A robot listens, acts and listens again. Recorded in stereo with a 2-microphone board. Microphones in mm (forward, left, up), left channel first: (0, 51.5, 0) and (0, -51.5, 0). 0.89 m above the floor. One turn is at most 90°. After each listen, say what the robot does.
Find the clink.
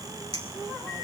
Turn 65° right.
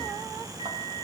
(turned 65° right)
Keep listening.
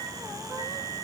Turn 55° right.
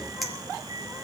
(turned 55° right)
Facing the clink, 2 to 4 m away.